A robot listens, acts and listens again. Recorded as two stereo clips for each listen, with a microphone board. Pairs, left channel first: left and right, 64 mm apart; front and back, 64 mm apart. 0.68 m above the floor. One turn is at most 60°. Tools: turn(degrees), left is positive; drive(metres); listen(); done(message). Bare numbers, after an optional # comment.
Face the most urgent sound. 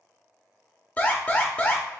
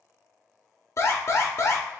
# The alarm: 30° left.
turn(30)
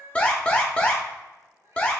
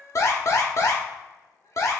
# The alarm is now 20° left.
turn(20)
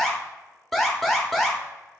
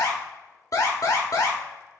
done("Facing the alarm.")